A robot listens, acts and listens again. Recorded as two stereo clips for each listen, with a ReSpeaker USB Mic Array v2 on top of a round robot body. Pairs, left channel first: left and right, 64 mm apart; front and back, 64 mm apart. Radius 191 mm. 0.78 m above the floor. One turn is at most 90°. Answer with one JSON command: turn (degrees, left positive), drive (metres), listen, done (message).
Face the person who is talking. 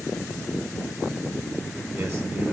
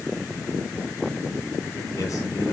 {"listen": true}
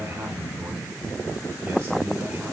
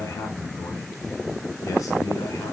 {"turn": -35}
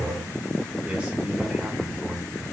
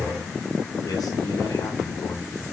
{"turn": -20}
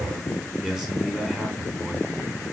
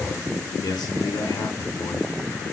{"done": "Facing the man speaking, 2 to 4 m away."}